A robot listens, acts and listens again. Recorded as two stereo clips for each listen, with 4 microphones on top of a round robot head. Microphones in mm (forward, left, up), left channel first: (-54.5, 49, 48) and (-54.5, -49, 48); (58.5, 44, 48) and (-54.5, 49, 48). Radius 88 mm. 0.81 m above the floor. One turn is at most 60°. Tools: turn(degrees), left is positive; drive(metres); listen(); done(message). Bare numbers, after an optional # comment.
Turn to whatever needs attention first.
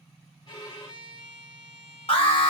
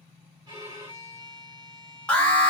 # The alarm: 75° left.
turn(60)
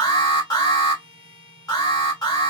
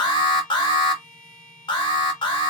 # The alarm is now 35° left.
turn(35)
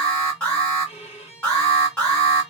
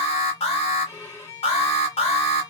# The alarm is now 10° left.
turn(10)
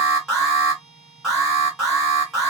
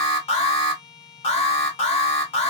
done("Found it: an alarm, straight ahead, 1 to 2 m away.")